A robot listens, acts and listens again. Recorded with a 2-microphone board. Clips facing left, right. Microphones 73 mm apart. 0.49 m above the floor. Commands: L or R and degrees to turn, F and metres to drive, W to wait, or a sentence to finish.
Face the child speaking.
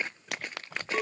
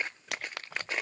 W
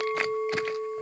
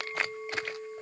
W
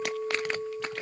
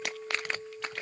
I can't make out a child speaking to turn to.